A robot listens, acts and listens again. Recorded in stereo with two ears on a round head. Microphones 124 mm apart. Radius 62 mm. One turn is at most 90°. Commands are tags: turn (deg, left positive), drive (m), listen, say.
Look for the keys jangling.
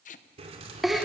<turn deg="-45"/>
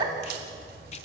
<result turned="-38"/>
<turn deg="-90"/>
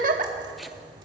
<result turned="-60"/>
<turn deg="-35"/>
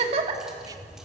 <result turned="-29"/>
<say>Facing the keys jangling.</say>